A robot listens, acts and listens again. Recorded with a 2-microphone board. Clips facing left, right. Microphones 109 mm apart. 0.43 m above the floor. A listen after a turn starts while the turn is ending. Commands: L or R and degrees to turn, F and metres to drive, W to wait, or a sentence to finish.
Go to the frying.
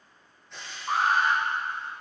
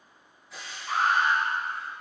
R30
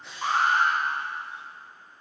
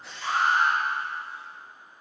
W
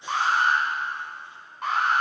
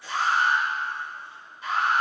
L25
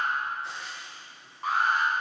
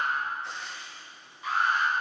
F1.0
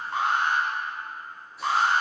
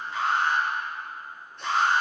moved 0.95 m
W
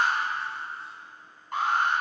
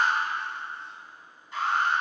W
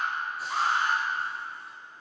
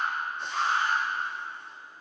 I heard frying from this way, but can't make it out now. I did not reach it.